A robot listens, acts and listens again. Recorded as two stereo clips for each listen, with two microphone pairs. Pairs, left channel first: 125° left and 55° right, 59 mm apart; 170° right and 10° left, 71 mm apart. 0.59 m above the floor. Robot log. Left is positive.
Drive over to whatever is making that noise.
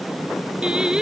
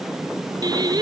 note: The singing: 20° left.
cmd yaw +20
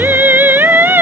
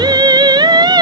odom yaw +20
cmd fwd 1.0
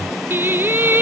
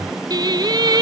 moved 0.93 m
cmd fwd 1.0
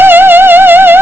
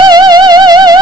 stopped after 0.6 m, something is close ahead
end: Arrived at the singing, straight ahead.